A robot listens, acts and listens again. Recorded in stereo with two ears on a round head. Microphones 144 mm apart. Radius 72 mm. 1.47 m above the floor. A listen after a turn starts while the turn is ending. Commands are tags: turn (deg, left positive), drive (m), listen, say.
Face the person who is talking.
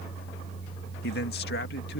<turn deg="70"/>
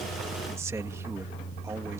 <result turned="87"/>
<listen/>
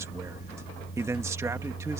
<turn deg="-20"/>
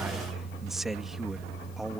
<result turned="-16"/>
<say>Found it: a man speaking, straight ahead.</say>